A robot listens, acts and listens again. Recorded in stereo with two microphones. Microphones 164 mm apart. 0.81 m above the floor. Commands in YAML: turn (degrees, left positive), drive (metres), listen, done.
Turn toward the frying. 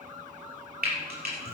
turn: -90
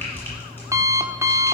listen: true
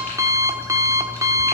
listen: true
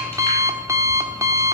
done: "I heard frying from this way, but can't make it out now."